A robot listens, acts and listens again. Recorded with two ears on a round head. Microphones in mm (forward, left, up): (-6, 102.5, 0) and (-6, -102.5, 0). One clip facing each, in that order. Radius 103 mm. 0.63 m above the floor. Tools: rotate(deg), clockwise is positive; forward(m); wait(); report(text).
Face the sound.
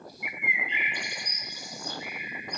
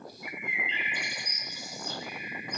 rotate(-30)
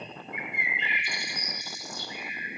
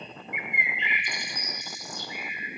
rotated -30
rotate(20)
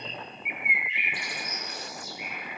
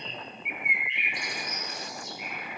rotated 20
report("Facing the bird.")